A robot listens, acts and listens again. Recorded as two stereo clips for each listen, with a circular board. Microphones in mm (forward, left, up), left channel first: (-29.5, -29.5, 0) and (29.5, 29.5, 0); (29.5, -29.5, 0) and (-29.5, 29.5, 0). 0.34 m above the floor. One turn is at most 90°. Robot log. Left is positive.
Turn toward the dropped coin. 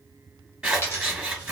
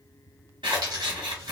note: The dropped coin: 165° left.
cmd yaw +90
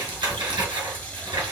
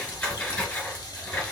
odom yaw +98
note: Nothing new. It was at 70° left.
cmd yaw +70
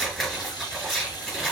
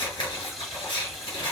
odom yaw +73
end: I heard a dropped coin from this way, but can't make it out now.